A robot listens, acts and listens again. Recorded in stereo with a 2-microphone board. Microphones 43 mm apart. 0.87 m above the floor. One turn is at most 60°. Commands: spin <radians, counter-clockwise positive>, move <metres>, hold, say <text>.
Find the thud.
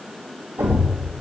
spin -1.05
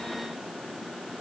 spin -0.52
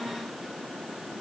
say I heard a thud from this way, but can't make it out now.